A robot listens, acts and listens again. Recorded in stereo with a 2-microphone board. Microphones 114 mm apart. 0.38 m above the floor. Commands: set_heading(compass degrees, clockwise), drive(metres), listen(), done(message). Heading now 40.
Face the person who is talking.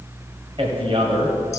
set_heading(90)
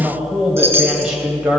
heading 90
set_heading(100)
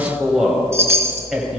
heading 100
done("Facing the man speaking, 1 to 2 m away.")